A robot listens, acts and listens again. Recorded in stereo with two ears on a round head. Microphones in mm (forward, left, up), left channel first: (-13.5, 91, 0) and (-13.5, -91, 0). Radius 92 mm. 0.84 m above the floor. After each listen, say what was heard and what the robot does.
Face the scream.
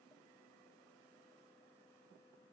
Keep listening.
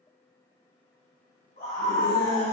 The scream: about 50° left or 130° left. Turn 50° left.
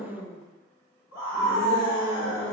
So it is at 60° left. Turn 60° left.
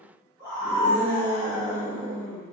The scream is now 15° left. Turn 15° left.
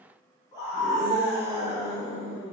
The scream is now 10° left. Turn 10° left.
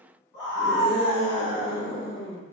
Facing the scream.